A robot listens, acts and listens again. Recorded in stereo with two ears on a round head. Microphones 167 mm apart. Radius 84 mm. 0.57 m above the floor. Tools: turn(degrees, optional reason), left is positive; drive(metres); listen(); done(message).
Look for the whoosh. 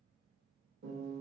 listen()
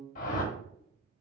turn(degrees=45, reason="The whoosh: about 45° left or 135° left.")
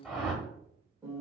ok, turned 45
done("Facing the whoosh.")